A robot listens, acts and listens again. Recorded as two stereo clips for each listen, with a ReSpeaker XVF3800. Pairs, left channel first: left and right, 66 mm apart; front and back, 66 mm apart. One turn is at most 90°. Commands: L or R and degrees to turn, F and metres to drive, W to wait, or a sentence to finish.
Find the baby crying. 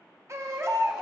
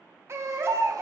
R90
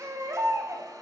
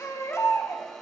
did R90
R45
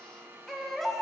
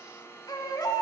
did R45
Facing the baby crying.